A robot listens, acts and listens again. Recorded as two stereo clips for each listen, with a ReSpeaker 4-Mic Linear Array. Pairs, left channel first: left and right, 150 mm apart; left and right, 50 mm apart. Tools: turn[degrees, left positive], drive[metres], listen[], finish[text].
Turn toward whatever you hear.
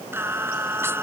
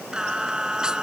Thought: The singing: about 15° right or 165° right.
Action: turn[-15]
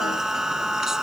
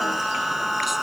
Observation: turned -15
Action: turn[-30]
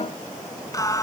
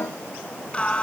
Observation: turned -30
Thought: So it is at 25° left.
Action: turn[25]
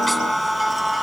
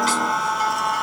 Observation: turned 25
Action: finish[Found it: singing, straight ahead.]